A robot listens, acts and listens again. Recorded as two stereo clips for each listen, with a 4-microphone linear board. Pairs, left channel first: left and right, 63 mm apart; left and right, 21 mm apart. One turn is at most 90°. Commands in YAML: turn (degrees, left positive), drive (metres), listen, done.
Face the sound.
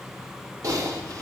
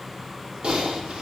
turn: -60
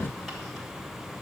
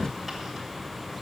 listen: true
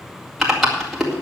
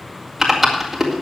done: "Facing the typing on a keyboard, 2 to 4 m away."